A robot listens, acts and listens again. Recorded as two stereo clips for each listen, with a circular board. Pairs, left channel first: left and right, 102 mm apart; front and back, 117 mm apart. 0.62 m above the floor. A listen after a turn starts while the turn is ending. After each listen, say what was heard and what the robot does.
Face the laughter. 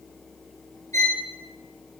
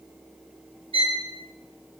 Keep listening.
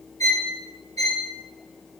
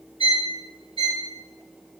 Keep listening.
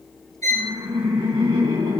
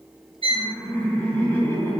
The laughter: 70° right. Turn 70° right.
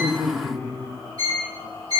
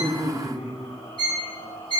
The laughter is now 20° left. Turn 20° left.
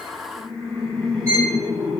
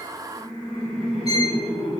Facing the laughter.